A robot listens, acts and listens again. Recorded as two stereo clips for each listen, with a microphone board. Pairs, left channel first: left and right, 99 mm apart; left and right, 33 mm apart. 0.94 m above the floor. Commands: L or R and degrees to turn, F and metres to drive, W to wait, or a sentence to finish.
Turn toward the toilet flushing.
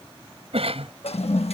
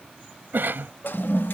L70
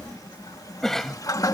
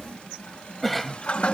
L35
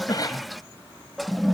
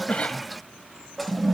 Facing the toilet flushing.